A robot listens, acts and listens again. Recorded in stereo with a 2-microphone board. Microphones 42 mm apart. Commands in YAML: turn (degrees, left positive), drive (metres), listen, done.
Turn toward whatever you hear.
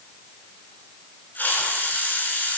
turn: 45
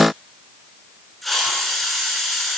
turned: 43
done: "Facing the hiss."